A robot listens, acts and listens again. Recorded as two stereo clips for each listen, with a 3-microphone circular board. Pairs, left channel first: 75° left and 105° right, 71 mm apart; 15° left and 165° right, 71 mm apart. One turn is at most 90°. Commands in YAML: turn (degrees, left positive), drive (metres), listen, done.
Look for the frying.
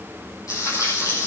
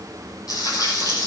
turn: 35
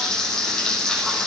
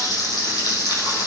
turn: -10
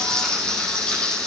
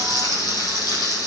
done: "Found it: frying, straight ahead."